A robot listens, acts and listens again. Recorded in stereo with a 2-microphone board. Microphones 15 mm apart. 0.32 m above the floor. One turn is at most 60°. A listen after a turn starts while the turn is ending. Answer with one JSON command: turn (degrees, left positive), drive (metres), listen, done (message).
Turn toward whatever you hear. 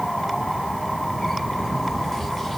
{"listen": true}
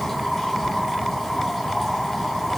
{"listen": true}
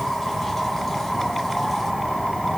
{"done": "I can't make out anything."}